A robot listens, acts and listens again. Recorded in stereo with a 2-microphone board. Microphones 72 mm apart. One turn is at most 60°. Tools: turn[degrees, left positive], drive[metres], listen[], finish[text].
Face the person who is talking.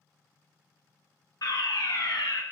Action: listen[]
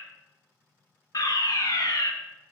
Action: listen[]
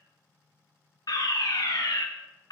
Action: finish[I can't make out anyone speaking, only a fire alarm.]